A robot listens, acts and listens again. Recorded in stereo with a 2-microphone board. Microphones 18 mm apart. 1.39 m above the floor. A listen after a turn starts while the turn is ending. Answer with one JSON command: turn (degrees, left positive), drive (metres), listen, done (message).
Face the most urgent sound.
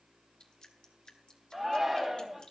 {"turn": -30}
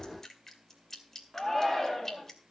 {"turn": 20}
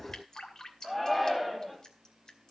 {"done": "Found it: a shout, straight ahead."}